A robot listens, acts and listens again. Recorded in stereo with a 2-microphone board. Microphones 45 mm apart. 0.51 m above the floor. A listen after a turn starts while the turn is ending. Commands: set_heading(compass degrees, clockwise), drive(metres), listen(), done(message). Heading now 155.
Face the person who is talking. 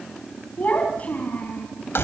set_heading(120)
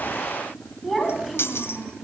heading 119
done("Found it: a child speaking, straight ahead, 2 to 4 m away.")